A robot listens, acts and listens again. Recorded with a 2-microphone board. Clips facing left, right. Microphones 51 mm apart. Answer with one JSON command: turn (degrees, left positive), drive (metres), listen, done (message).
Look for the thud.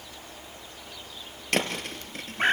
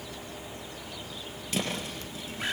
{"turn": 60}
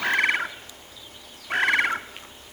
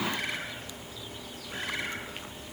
{"listen": true}
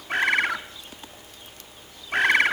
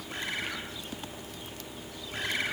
{"done": "I heard a thud, but can't make it out now. It was about straight ahead or 60° left."}